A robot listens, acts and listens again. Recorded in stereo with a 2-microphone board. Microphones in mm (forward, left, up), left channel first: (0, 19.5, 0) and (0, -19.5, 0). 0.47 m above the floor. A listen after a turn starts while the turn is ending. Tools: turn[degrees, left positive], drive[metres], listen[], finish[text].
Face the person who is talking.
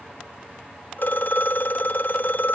Action: listen[]
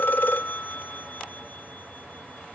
Action: listen[]
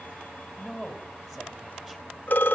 Action: turn[-30]
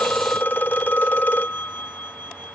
Action: listen[]
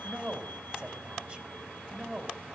Thought: So it is at 140° right.
Action: turn[-140]
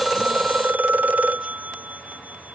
Action: listen[]
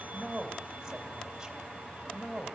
Thought: The woman speaking is now 15° right.
Action: turn[-15]
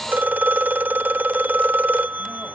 Action: listen[]
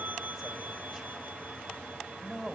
Action: finish[Facing the woman speaking.]